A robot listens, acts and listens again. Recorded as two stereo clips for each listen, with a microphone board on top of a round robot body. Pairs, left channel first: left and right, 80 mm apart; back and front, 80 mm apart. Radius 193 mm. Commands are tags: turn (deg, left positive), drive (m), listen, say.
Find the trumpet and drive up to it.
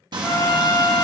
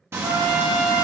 <turn deg="35"/>
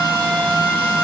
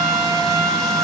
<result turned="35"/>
<drive m="1.0"/>
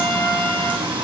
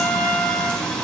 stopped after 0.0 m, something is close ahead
<say>Blocked. The trumpet is further on, straight ahead.</say>